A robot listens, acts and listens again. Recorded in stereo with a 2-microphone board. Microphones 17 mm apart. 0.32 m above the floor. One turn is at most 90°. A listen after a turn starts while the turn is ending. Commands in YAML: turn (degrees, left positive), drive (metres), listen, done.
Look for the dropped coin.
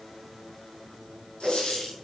turn: 90
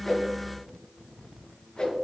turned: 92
done: "Facing where the dropped coin came from. I can't hear it now."